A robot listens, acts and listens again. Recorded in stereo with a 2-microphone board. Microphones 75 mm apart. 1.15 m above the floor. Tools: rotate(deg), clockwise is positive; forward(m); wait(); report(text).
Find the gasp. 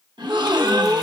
rotate(90)
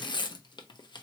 report("I heard a gasp from this way, but can't make it out now.")